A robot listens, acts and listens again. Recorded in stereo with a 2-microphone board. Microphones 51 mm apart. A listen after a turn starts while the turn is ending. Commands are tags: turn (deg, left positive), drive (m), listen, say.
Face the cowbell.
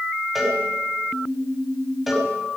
<turn deg="-30"/>
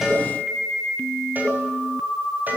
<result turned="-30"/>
<turn deg="-145"/>
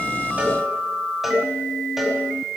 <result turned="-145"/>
<say>Found it: a cowbell, straight ahead, over 4 m away.</say>